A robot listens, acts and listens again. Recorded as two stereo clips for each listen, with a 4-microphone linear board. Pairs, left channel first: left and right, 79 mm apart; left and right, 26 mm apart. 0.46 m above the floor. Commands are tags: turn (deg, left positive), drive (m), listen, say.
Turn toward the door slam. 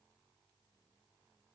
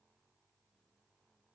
<listen/>
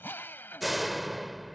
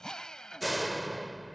<turn deg="30"/>
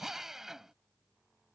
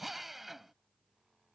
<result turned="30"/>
<listen/>
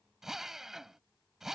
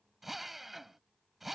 <say>I heard a door slam, but can't make it out now. It was about 30° right or 150° left.</say>